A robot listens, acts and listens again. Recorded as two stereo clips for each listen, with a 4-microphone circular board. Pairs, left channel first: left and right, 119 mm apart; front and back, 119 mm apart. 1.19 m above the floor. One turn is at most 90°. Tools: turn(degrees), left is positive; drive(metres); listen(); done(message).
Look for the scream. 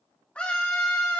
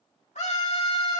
turn(degrees=10)
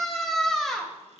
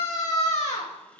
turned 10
done("Found it: a scream, straight ahead.")